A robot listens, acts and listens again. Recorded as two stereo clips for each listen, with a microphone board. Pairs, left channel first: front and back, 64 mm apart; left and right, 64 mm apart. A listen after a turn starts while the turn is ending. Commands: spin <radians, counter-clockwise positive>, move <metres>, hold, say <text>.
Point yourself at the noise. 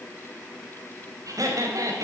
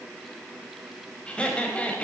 spin 2.79
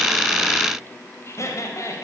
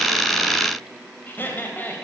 spin 0.52
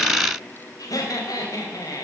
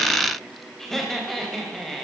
say Facing the laughter.